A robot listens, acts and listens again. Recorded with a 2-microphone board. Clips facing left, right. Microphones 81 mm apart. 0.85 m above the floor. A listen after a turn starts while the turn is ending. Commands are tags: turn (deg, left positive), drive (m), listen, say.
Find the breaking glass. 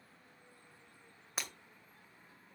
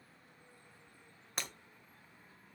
<turn deg="30"/>
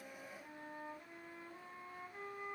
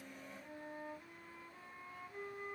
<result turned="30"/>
<listen/>
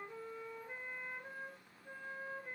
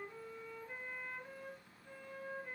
<say>I heard breaking glass, but can't make it out now. It was about 25° right or 145° left.</say>